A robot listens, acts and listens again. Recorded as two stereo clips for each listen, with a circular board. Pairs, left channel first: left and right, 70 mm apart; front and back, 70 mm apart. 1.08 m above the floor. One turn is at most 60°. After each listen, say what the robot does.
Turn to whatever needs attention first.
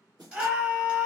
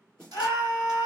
Turn 25° right.
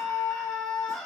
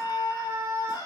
Facing the scream.